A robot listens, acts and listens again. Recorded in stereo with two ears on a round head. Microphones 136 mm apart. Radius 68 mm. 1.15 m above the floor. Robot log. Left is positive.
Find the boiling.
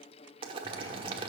note: The boiling: about 35° right or 145° right.
cmd yaw -35
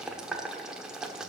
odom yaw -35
end: Found it: boiling, straight ahead.